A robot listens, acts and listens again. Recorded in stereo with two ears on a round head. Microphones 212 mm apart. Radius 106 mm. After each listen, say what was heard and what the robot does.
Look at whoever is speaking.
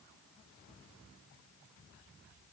Keep listening.
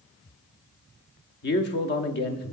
The man speaking: about 45° left or 135° left. Turn 45° left.
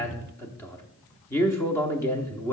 So it is at 15° left. Turn 15° left.
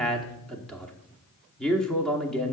Facing the man speaking.